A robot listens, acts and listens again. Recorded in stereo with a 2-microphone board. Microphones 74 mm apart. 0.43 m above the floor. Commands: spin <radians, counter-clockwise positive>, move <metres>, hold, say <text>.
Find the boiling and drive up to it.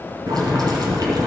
spin -1.13
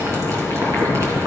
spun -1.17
spin -0.79
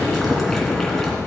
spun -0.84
move 1.0
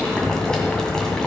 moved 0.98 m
spin 0.17
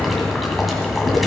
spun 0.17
move 1.0
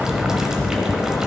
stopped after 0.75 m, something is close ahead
spin -0.17
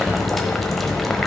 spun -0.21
say I am next to the boiling.